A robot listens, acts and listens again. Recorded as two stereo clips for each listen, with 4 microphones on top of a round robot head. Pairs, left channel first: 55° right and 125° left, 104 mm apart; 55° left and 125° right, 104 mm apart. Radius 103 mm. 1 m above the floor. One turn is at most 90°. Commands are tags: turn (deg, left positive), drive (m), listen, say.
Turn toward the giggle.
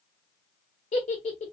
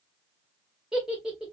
<turn deg="-40"/>
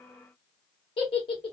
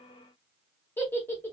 <turn deg="-15"/>
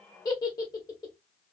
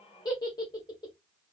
<say>Found it: a giggle, straight ahead, 1 to 2 m away.</say>